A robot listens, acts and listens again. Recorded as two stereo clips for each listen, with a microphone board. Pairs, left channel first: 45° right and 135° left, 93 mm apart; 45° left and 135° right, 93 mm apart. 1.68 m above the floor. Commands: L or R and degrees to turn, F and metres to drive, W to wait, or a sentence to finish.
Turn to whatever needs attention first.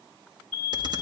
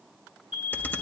L150
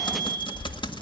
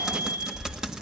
R15
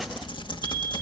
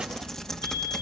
W
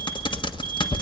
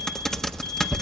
W
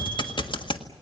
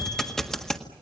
I heard an alarm from this way, but can't make it out now.